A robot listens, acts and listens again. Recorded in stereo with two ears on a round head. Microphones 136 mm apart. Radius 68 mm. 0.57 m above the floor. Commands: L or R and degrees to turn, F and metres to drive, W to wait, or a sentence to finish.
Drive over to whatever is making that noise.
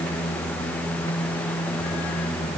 W
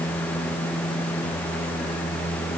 W
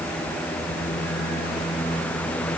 I can't make out anything to turn to.